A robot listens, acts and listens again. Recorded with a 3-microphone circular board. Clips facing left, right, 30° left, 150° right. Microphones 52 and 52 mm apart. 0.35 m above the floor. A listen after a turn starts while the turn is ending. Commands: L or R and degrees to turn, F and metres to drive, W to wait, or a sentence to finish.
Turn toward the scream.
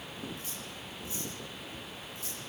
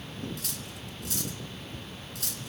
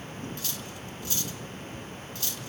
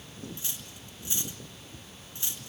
W
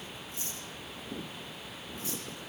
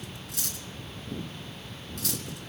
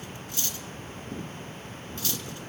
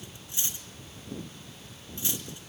W
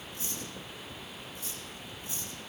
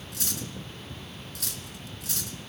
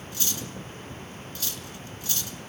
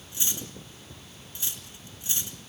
I can't make out a scream to turn to.